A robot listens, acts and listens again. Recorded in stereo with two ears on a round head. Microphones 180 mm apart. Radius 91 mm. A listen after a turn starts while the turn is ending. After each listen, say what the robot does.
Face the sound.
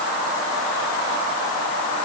Keep listening.
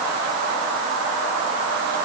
Keep listening.
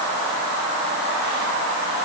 I can't make out anything.